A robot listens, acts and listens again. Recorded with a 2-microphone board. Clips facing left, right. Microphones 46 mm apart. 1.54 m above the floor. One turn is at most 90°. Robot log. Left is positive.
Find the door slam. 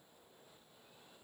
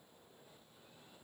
cmd idle
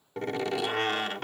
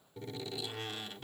cmd yaw +90
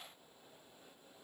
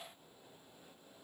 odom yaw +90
end: Facing where the door slam came from. I can't hear it now.